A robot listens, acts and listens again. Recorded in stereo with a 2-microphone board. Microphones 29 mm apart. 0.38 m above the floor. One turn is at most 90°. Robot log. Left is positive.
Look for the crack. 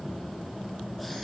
cmd idle
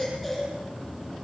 cmd idle
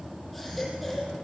end: I can't make out a crack, only a baby crying.